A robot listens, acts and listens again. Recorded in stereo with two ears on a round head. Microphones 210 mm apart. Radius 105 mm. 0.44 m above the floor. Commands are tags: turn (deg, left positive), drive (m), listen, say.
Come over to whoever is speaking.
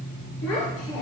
<turn deg="70"/>
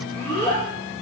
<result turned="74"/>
<turn deg="10"/>
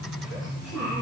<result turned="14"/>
<drive m="1.0"/>
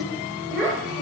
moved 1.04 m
<drive m="1.0"/>
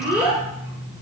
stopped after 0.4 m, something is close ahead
<turn deg="-10"/>
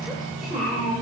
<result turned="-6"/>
<say>Arrived at the child speaking, straight ahead.</say>